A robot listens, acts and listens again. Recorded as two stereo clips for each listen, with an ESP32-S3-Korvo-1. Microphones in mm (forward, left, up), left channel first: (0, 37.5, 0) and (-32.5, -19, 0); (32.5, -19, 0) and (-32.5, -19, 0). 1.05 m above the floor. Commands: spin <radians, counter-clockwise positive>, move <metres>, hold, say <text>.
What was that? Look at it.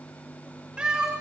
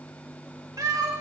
spin 2.79
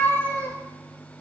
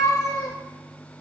say Found it: a cat meowing, straight ahead, 2 to 4 m away.